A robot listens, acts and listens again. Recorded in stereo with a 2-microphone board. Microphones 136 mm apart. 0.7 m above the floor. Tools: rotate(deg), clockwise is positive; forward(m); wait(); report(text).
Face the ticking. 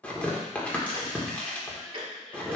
rotate(40)
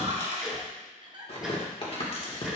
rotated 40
wait()
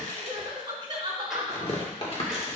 wait()
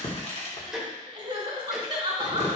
report("Facing the ticking, 1 to 2 m away.")